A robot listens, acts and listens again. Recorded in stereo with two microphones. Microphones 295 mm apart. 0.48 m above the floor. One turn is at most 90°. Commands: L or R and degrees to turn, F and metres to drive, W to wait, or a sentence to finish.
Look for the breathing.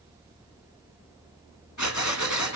L75
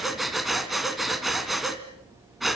Facing the breathing.